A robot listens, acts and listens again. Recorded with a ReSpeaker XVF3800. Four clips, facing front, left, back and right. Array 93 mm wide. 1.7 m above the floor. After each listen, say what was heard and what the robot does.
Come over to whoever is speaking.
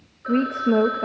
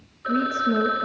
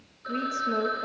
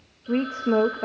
The woman speaking: 45° right. Turn 45° right.
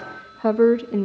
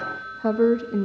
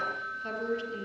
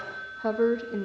Drive 1.0 m forward.
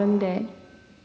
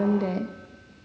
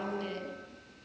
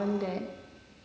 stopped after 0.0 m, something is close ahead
Something is in my way. I am facing the woman speaking but have not reached it.